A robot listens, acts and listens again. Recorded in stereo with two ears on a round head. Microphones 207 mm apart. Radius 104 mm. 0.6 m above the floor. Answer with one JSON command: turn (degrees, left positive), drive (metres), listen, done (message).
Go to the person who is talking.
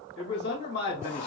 {"turn": 45}
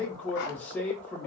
{"drive": 1.0}
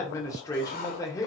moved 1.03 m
{"turn": 15}
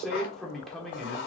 {"drive": 1.0}
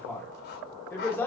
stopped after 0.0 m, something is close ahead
{"turn": 10}
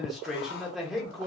{"done": "I am next to the man speaking."}